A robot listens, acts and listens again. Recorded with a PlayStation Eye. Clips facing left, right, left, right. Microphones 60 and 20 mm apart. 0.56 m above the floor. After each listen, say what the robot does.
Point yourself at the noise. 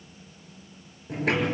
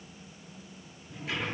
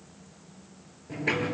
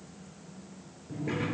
Turn 90° left.
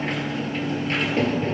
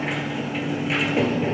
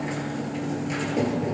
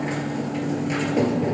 Turn 10° right.
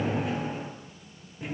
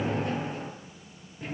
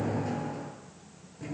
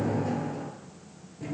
Found it: a sliding door, straight ahead, 2 to 4 m away.